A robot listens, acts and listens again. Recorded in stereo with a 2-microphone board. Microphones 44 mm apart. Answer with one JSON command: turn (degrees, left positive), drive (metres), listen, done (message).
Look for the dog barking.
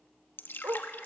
{"turn": -90}
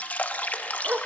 {"turn": -40}
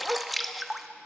{"turn": -20}
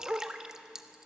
{"turn": -25}
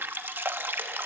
{"listen": true}
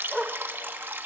{"done": "Facing the dog barking."}